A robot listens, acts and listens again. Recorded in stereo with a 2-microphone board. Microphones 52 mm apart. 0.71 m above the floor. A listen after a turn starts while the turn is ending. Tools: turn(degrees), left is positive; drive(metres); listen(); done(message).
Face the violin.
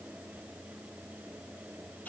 listen()
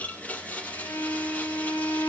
turn(degrees=90)
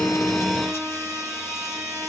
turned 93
done("Found it: a violin, straight ahead, over 4 m away.")